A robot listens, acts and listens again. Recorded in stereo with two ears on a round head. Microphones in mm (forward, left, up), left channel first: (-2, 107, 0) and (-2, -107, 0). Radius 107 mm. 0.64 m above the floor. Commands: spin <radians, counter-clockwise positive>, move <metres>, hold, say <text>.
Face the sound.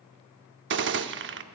spin -0.87
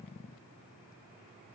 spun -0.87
hold
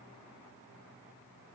say I heard a gunshot, but can't make it out now. It was about straight ahead or 80° right.